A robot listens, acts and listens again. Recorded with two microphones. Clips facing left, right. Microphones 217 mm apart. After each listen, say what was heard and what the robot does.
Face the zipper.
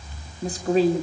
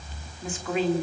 Keep listening.
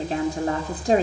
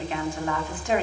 Keep listening.
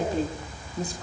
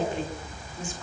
I can't make out a zipper to turn to.